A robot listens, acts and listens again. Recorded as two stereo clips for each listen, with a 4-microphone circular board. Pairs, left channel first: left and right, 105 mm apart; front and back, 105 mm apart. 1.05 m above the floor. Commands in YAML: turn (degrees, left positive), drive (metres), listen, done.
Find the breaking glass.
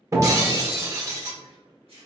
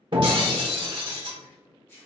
turn: -145
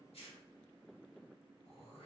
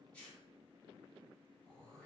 done: "Facing where the breaking glass came from. I can't hear it now."